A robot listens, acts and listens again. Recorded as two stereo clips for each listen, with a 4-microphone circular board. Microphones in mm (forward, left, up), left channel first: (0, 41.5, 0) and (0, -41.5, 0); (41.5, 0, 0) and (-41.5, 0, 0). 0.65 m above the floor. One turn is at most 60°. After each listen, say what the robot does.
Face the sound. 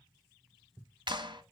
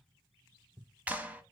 Turn 60° right.
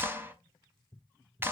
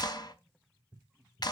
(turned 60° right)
Turn 30° right.
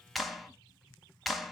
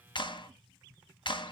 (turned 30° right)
Facing the clap.